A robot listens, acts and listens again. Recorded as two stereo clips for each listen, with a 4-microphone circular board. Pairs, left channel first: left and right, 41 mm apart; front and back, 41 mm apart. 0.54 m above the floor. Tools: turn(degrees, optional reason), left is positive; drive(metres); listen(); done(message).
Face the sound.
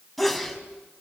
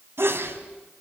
turn(degrees=180, reason="The sneeze: straight behind.")
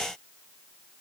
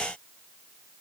done("I heard a sneeze from this way, but can't make it out now.")